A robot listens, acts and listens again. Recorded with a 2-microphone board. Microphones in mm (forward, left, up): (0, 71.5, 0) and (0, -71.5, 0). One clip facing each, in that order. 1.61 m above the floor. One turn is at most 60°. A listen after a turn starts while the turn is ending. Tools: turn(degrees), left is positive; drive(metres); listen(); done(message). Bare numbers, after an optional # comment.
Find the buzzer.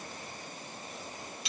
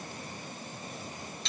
listen()
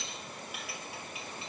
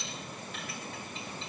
listen()
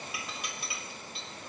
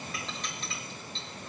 done("I can't make out a buzzer to turn to.")